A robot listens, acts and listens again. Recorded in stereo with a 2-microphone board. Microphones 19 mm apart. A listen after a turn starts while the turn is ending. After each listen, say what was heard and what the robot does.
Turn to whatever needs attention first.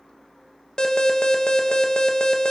The alarm: about 50° left or 130° left. Turn 50° left.
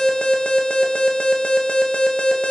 So it is at 75° left. Turn 75° left.
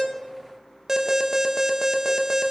The alarm is now 40° right. Turn 40° right.
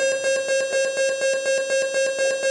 The alarm is now 15° left. Turn 15° left.
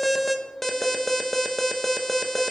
Found it: an alarm, straight ahead.